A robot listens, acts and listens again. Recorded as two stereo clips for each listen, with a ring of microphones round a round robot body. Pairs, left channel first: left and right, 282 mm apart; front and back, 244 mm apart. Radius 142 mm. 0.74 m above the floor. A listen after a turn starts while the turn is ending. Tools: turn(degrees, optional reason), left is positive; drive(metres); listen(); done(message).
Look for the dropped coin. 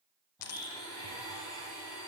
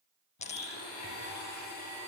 turn(degrees=60, reason="The dropped coin: 60° left.")
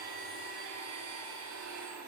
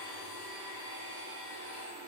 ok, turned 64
done("I heard a dropped coin from this way, but can't make it out now.")